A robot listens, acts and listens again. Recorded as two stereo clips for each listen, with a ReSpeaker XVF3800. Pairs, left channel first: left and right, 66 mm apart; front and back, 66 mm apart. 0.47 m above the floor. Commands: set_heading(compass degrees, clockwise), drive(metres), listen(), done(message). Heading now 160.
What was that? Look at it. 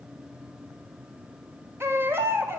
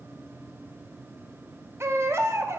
set_heading(295)
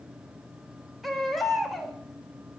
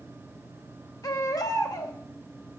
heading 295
done("Found it: a baby crying, straight ahead, 1 to 2 m away.")